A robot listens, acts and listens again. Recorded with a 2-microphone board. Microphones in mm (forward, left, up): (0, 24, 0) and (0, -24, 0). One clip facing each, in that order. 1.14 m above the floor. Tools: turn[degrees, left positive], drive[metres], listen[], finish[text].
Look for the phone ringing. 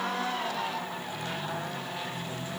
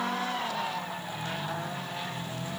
Action: listen[]
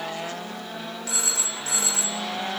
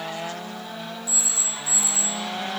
Thought: The phone ringing: about 65° left or 115° left.
Action: turn[65]
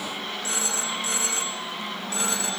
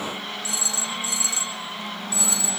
Thought: So it is at 50° left.
Action: turn[50]
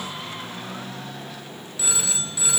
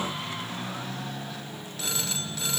Thought: The phone ringing is now 10° left.
Action: turn[10]
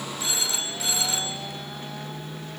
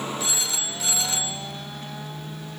Action: finish[Facing the phone ringing.]